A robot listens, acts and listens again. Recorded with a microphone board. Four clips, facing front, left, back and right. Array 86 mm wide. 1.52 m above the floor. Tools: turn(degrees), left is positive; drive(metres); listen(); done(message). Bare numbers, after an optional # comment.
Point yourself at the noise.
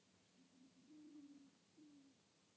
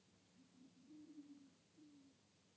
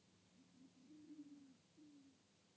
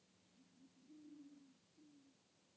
listen()
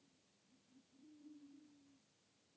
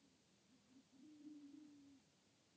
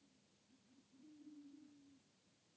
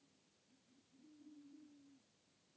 listen()
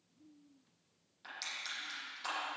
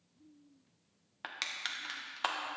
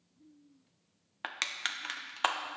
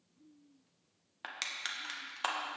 # The crushing: 175° left.
turn(175)
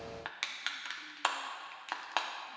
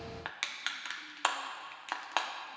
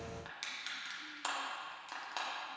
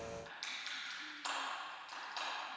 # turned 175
# The crushing is now 55° left.
turn(55)
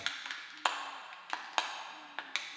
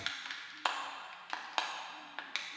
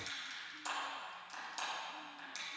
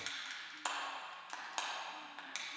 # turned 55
# The crushing is now 25° left.
turn(25)
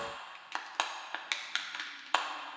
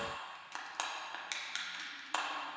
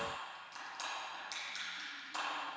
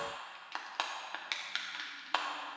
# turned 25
# The crushing is now 15° right.
turn(-15)
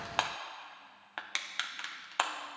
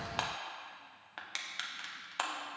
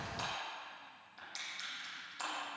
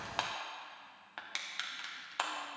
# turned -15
done("Facing the crushing.")